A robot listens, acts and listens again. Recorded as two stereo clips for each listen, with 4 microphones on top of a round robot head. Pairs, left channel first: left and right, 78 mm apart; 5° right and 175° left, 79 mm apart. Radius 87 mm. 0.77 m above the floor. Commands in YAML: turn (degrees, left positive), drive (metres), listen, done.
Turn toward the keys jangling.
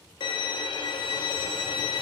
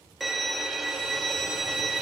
listen: true
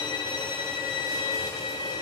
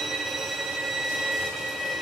listen: true
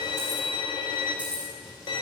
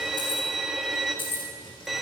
turn: -10
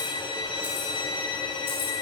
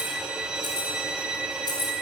turn: 25
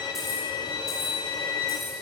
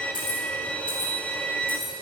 done: "Found it: keys jangling, straight ahead."